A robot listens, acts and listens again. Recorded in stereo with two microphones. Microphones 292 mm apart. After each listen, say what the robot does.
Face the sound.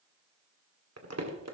Turn 60° right.
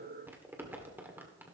Turn 10° right.
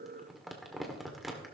Facing the crumpling.